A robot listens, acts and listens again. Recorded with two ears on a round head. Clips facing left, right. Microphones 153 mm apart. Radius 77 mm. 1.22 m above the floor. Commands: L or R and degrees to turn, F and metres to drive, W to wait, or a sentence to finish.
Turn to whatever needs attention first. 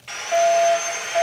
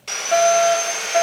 R60
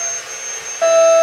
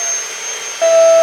R35
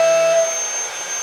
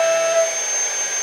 L15
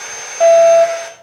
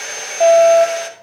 Found it: a fire alarm, straight ahead, 1 to 2 m away.